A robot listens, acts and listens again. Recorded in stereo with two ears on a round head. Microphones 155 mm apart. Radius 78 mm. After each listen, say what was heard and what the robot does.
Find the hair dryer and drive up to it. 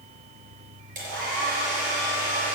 The hair dryer: about 50° right or 130° right. Turn 50° right.
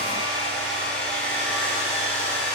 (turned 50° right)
Drive 1.0 m forward.
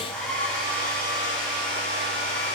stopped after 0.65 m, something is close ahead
Blocked. The hair dryer is further on, straight ahead.